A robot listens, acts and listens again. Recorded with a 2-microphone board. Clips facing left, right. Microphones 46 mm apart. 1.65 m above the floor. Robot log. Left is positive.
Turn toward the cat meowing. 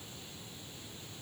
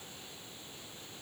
cmd idle
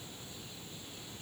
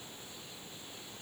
cmd idle
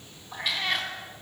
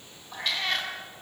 cmd yaw +30
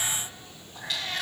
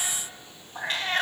note: So it is at 40° right.
cmd yaw -40
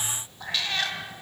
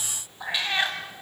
note: The cat meowing is now 25° right.
cmd yaw -25
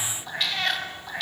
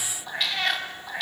end: Facing the cat meowing.